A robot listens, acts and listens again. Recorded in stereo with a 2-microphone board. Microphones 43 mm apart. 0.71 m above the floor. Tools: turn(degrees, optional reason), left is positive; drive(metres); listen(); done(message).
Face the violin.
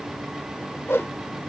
listen()
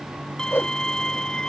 turn(degrees=30)
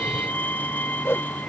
turn(degrees=135, reason="So it is at 135° left.")
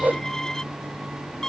turn(degrees=15, reason="The violin is now 15° left.")
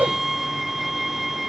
done("Found it: a violin, straight ahead.")